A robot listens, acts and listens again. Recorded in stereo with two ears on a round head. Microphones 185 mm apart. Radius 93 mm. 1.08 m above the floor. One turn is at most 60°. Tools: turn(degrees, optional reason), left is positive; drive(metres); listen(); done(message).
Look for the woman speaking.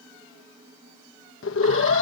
listen()
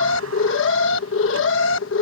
listen()
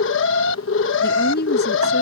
turn(degrees=50, reason="The woman speaking: about 50° left or 130° left.")
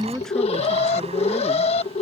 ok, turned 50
done("Facing the woman speaking.")